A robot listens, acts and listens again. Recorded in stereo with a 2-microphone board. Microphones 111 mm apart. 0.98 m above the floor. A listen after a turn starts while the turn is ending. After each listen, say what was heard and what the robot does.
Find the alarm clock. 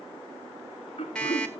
Turn 30° left.
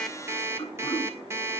So it is at 25° right. Turn 25° right.
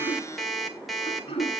Found it: an alarm clock, straight ahead.